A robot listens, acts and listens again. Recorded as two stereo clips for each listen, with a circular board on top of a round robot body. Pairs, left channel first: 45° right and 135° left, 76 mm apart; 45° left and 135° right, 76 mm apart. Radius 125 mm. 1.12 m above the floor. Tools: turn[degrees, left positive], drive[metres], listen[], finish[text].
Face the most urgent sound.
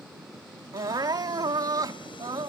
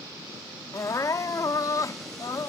Thought: The crying: 90° left.
Action: turn[90]
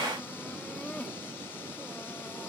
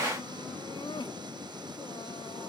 Action: listen[]
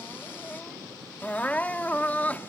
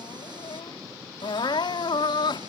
Thought: The crying is now 25° left.
Action: turn[25]
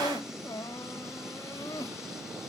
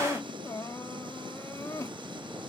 Action: finish[Facing the crying.]